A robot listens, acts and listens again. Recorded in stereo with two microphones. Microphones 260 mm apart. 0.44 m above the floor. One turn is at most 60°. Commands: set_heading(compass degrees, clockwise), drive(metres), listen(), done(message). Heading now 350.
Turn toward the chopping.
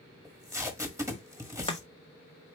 set_heading(330)
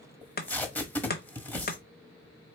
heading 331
set_heading(271)
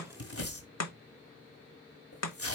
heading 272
set_heading(212)
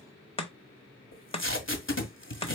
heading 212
set_heading(187)
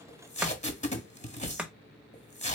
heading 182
done("Facing the chopping.")